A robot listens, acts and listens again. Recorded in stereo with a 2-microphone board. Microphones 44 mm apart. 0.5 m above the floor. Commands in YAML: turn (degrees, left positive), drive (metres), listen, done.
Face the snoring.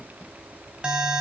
listen: true
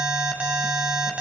listen: true
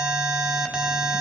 done: "I can't make out snoring, only an alarm."